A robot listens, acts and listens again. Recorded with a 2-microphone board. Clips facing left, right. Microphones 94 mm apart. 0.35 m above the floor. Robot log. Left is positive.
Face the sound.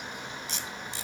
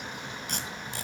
note: The tape being pulled: about 55° right or 125° right.
cmd yaw -55
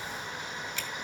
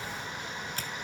cmd idle
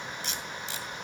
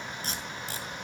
note: So it is at 55° right.
cmd yaw -55
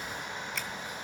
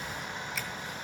cmd idle
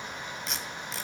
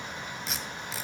end: Facing the tape being pulled.